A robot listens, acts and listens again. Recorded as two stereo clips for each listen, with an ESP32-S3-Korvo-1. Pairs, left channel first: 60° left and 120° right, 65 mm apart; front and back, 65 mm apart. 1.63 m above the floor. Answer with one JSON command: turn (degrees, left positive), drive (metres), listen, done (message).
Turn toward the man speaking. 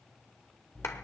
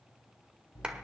{"listen": true}
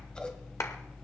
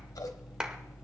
{"listen": true}
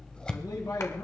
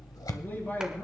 {"turn": 60}
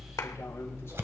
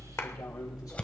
{"listen": true}
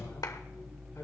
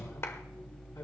{"listen": true}
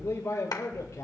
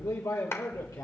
{"turn": 25}
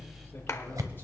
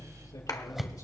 {"listen": true}
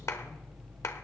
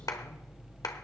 {"listen": true}
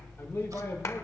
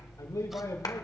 {"done": "Facing the man speaking, over 4 m away."}